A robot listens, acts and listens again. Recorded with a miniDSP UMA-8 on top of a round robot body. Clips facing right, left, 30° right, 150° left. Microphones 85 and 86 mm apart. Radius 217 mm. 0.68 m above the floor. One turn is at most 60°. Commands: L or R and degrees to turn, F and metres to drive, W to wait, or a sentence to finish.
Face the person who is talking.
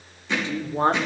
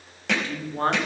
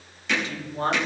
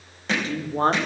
R60
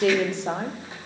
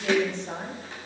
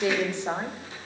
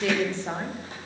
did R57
R60
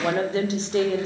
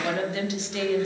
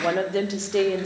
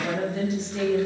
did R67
R35
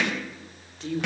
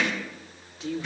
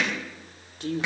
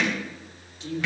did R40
Facing the woman speaking.